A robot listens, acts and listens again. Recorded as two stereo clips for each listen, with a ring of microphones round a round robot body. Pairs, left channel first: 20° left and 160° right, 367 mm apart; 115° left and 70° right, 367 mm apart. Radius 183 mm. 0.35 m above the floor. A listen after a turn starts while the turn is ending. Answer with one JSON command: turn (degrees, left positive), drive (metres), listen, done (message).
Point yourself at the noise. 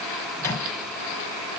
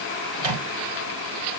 {"turn": -60}
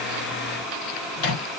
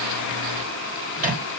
{"done": "Found it: a microwave, straight ahead."}